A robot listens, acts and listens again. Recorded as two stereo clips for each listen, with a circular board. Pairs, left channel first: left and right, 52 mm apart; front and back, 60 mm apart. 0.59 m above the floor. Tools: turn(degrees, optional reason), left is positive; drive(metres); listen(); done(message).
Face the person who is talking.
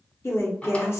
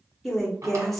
turn(degrees=85, reason="The woman speaking: 85° left.")
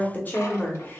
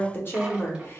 turn(degrees=40, reason="The woman speaking is now 40° left.")
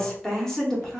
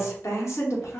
turn(degrees=10, reason="The woman speaking is now 10° left.")
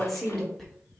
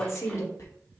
done("Facing the woman speaking.")